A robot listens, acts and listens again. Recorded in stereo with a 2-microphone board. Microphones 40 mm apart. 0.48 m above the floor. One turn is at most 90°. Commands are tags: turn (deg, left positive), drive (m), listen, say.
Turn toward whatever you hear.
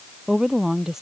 <turn deg="-30"/>
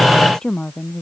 <turn deg="15"/>
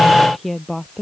<say>Found it: a woman speaking, straight ahead.</say>